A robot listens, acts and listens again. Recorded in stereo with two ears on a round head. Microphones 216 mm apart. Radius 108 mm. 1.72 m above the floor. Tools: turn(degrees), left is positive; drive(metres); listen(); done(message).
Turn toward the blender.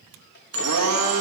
turn(degrees=-70)
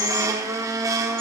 turn(degrees=-15)
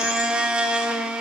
done("Found it: a blender, straight ahead, 1 to 2 m away.")